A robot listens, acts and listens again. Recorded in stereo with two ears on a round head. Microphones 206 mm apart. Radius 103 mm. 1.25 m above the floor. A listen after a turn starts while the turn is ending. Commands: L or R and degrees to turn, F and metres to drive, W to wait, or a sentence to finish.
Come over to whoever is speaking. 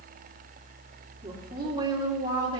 R20
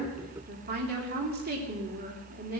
R140
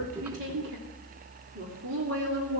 R50
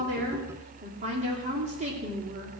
R30
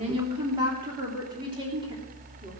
R20
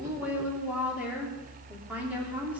F1.0
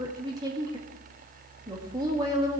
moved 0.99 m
R15
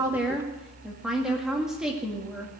F1.0
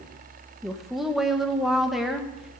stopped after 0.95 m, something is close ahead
Arrived at the woman speaking, straight ahead.